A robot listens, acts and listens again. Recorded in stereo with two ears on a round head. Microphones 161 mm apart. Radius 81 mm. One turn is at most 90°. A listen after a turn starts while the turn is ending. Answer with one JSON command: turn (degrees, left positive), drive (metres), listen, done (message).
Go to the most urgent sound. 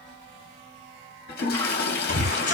{"turn": 55}
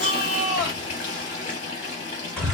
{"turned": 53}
{"drive": 1.0}
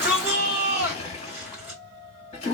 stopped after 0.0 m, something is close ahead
{"done": "Blocked. The shout is further on, straight ahead."}